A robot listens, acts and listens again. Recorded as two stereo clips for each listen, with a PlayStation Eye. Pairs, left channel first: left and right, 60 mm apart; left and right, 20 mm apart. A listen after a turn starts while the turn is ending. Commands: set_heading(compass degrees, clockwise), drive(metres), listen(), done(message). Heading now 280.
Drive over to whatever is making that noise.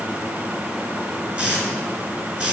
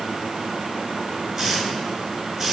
set_heading(305)
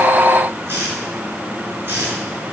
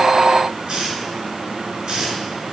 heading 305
set_heading(80)
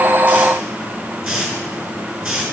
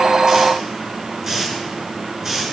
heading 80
set_heading(90)
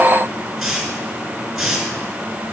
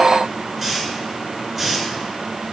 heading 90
drive(1.0)
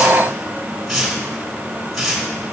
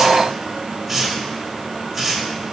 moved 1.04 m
drive(1.0)
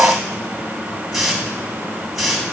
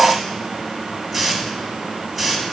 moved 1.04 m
drive(1.0)
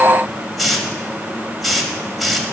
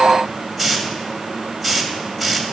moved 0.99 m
drive(1.0)
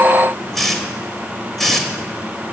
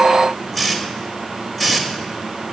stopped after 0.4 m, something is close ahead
done("I am next to the hiss.")